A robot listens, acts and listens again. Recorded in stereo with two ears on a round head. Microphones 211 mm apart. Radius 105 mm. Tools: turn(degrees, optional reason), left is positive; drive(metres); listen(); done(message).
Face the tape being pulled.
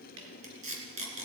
turn(degrees=-30, reason="The tape being pulled: about 30° right or 150° right.")
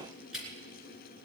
done("Found it: tape being pulled, straight ahead.")